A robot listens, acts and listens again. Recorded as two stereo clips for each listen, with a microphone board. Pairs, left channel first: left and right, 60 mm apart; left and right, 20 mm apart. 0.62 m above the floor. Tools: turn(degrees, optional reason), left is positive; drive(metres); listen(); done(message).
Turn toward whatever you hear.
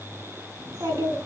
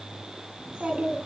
turn(degrees=-90)
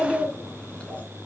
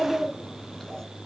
turn(degrees=20, reason="So it is at 20° left.")
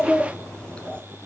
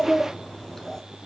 turn(degrees=20, reason="The child speaking is now 20° left.")
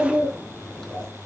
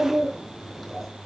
turn(degrees=10, reason="The child speaking is now 10° left.")
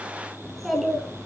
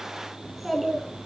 done("Facing the child speaking.")